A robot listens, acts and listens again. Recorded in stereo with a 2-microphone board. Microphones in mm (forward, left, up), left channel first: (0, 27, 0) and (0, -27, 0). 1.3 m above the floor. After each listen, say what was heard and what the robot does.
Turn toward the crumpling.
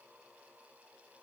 Keep listening.
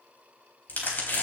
The crumpling: about 35° left or 145° left. Turn 35° left.
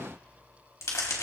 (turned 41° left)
So it is at 105° left. Turn 105° left.
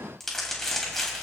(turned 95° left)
Found it: crumpling, straight ahead, 2 to 4 m away.